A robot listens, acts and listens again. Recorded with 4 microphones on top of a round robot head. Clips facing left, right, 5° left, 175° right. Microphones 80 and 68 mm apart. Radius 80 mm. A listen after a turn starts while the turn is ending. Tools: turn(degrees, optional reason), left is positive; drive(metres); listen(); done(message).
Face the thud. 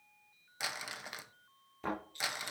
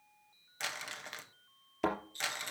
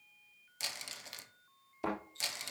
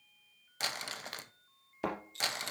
turn(degrees=-120, reason="The thud: 120° right.")
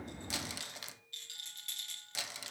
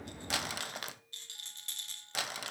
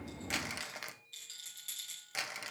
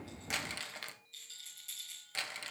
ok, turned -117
done("I heard a thud from this way, but can't make it out now.")